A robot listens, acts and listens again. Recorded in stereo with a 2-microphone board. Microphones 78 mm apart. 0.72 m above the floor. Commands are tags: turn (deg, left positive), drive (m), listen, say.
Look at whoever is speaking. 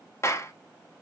<listen/>
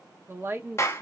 <turn deg="-30"/>
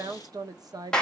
<turn deg="-115"/>
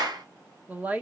<turn deg="-20"/>
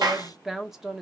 <say>Found it: a woman speaking, straight ahead, 1 to 2 m away.</say>